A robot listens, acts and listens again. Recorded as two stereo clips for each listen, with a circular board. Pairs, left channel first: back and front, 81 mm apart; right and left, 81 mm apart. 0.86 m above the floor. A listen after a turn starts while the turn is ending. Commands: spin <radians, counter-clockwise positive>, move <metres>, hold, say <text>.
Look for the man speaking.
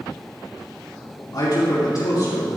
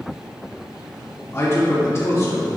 spin -2.44
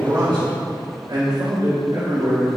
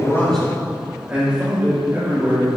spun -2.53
spin 0.52
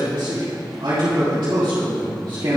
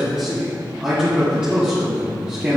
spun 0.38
spin 0.35
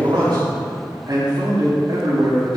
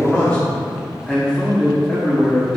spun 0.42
say Found it: a man speaking, straight ahead.